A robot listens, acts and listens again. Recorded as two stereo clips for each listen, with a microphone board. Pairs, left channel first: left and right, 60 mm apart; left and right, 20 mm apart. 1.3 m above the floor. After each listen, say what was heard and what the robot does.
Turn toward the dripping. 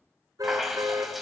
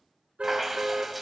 Turn 30° right.
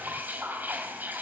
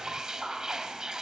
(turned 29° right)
So it is at 150° right. Turn 150° right.
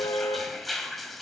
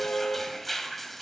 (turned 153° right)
Facing the dripping, 2 to 4 m away.